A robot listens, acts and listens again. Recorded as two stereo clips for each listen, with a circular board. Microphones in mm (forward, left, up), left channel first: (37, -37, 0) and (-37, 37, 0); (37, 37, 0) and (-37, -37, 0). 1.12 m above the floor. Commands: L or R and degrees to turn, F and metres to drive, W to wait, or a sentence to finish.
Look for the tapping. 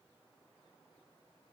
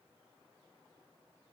W
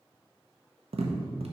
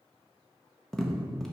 L130
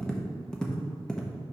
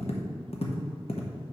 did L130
L40
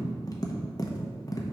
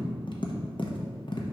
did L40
L10
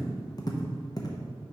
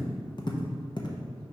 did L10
Facing the tapping.